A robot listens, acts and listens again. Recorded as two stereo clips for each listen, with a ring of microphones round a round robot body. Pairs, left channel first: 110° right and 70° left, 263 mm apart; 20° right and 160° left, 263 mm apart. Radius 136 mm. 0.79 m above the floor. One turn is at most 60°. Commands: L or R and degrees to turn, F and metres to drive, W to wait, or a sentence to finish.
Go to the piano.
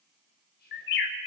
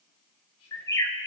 W
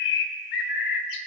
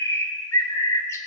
W
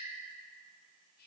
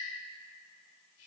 I can't make out a piano, only a bird and whispering.